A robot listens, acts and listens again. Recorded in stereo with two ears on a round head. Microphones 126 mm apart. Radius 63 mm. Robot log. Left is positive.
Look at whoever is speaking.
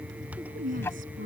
note: The woman speaking: about 70° right or 110° right.
cmd yaw -70
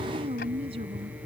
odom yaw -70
note: So it is at 40° right.
cmd yaw -40
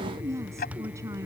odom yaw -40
note: The woman speaking is now 20° right.
cmd yaw -20
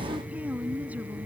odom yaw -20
note: The woman speaking is now 10° right.
cmd yaw -10
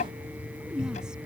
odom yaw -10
cmd idle
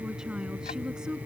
end: Found it: a woman speaking, straight ahead.